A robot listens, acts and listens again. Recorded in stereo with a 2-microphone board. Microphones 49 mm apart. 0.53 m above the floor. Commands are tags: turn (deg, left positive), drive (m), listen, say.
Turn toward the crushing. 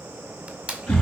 <turn deg="-25"/>
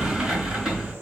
<listen/>
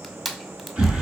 <say>Facing the crushing, 1 to 2 m away.</say>